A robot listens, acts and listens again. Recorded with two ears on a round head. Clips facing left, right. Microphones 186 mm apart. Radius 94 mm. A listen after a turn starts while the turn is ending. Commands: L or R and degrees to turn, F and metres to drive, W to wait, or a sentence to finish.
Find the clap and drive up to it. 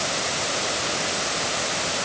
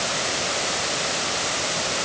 W
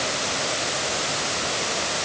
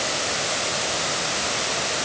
W
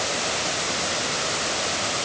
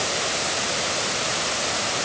I can't make out a clap to turn to.